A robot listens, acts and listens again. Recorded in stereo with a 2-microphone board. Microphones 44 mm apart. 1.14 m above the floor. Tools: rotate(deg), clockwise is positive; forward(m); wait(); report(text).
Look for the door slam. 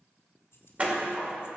rotate(30)
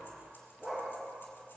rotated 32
wait()
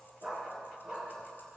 report("I heard a door slam, but can't make it out now. It was about straight ahead or 115° right.")